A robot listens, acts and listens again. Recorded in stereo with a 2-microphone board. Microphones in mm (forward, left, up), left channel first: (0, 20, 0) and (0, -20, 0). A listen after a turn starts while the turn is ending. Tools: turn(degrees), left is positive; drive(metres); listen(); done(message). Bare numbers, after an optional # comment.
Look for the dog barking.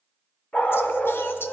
# The dog barking: about 45° left or 135° left.
turn(45)
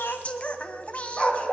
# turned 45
# So it is at 20° left.
turn(20)
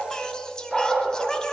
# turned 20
# The dog barking is now 15° left.
turn(15)
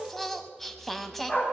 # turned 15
# The dog barking is now 15° left.
turn(15)
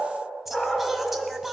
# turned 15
# The dog barking is now 10° left.
turn(10)
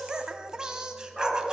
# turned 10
done("Found it: a dog barking, straight ahead.")